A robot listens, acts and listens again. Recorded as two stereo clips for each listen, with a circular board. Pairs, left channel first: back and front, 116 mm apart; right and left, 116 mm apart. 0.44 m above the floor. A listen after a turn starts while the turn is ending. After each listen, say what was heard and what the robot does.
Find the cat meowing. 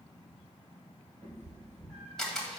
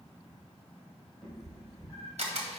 Found it: a cat meowing, straight ahead.